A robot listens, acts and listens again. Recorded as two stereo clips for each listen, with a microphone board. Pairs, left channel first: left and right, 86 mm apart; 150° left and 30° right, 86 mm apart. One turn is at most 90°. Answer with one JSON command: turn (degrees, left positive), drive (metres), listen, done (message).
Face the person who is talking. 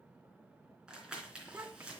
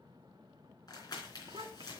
{"turn": -25}
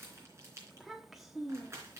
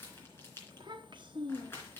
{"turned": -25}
{"done": "Facing the child speaking, 1 to 2 m away."}